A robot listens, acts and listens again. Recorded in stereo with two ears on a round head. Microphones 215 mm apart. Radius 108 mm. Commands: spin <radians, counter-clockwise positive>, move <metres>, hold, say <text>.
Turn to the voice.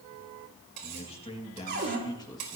spin 0.26
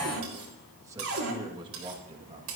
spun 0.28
spin -0.44
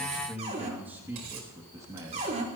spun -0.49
spin -0.26
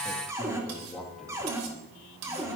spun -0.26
say Found it: a man speaking, straight ahead, 2 to 4 m away.